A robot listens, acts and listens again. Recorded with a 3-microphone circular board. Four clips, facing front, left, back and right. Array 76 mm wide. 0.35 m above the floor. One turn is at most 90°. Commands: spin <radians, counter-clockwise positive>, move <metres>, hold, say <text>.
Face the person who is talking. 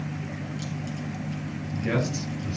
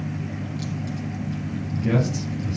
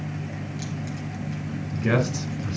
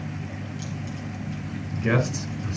spin -1.57
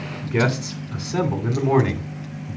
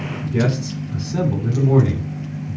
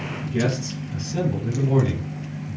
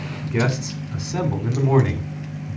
spin -0.70
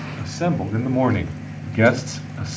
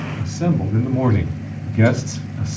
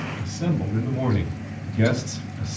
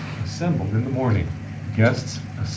say Found it: a man speaking, straight ahead, 2 to 4 m away.